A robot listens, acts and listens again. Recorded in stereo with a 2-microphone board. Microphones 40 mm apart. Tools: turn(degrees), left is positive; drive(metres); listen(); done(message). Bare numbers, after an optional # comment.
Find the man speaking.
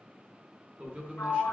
# The man speaking: about 30° right or 150° right.
turn(-30)
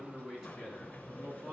# So it is at 15° right.
turn(-15)
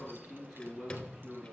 done("Found it: a man speaking, straight ahead.")